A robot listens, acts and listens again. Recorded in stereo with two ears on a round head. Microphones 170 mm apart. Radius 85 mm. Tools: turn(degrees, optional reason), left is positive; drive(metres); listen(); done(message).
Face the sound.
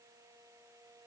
listen()
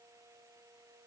listen()
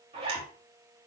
turn(degrees=-30, reason="The zipper: about 30° right or 150° right.")
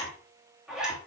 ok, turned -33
done("Found it: a zipper, straight ahead.")